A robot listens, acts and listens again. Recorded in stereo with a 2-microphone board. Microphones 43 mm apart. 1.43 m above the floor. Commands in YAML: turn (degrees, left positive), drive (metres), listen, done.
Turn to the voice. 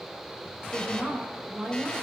turn: -30
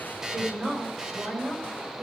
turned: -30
turn: -150
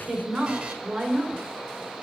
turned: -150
turn: -15
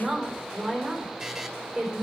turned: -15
done: "Found it: a woman speaking, straight ahead."